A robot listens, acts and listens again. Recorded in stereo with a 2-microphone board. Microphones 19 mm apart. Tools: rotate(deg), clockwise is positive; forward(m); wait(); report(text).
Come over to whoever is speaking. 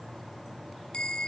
wait()
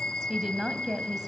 rotate(30)
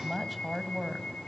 rotate(10)
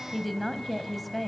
forward(1.0)
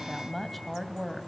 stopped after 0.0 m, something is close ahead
report("Blocked. The woman speaking is further on, straight ahead.")